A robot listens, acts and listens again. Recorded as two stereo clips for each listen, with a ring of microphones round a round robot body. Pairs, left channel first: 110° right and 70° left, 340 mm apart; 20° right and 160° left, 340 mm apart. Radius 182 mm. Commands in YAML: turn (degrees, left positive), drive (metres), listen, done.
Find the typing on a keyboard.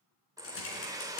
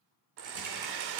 turn: -165
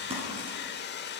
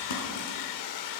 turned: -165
listen: true
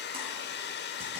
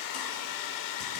listen: true
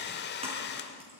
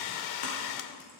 done: "Found it: typing on a keyboard, straight ahead."